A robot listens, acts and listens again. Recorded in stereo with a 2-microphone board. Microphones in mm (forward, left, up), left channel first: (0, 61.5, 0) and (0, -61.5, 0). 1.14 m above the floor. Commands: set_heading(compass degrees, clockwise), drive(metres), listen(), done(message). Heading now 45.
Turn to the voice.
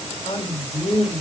set_heading(335)
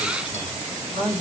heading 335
set_heading(295)
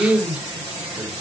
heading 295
done("Facing the man speaking.")